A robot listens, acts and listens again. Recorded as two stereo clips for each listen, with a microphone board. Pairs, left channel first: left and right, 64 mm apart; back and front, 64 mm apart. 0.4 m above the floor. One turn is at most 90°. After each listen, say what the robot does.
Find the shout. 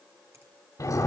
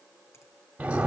Keep listening.
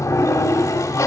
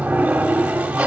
Keep listening.
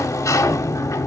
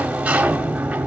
I can't make out a shout, only a sliding door.